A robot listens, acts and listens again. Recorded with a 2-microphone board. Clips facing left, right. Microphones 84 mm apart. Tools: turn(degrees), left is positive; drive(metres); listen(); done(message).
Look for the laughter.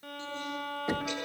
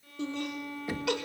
turn(degrees=-75)
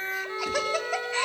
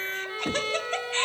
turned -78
turn(degrees=10)
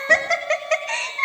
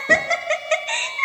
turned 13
done("Facing the laughter.")